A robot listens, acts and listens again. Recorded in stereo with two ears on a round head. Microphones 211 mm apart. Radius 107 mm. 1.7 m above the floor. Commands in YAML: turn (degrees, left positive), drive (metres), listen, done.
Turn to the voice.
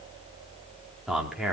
turn: -30
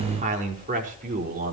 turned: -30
turn: -140
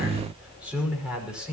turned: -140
done: "Facing the man speaking."